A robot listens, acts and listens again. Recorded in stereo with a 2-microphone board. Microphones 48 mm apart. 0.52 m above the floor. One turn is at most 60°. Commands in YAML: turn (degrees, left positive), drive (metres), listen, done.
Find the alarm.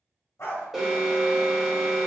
turn: -30
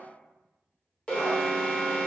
turn: 25
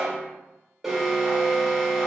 turn: -10
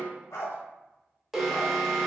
done: "Facing the alarm, 1 to 2 m away."